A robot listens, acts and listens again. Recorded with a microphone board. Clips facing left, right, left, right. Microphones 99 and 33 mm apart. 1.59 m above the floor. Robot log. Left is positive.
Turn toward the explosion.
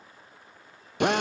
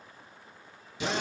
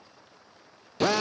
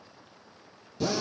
cmd idle
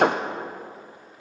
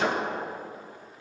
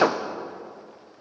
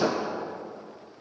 cmd idle
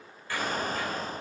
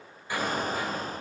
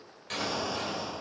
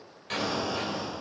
note: The explosion: about 15° right or 165° right.
cmd yaw -15
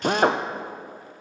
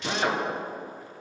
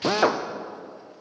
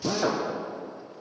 cmd idle
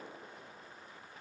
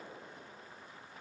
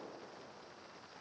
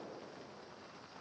end: I heard an explosion, but can't make it out now. It was about straight ahead or 150° right.